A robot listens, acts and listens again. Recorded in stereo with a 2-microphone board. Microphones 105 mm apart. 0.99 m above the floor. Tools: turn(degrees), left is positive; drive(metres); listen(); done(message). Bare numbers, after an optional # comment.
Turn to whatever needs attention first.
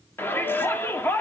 # The shout: about 20° left or 160° left.
turn(20)
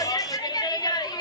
# So it is at 135° left.
turn(135)
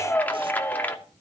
# The shout is now 15° left.
turn(15)
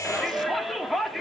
done("Facing the shout, 2 to 4 m away.")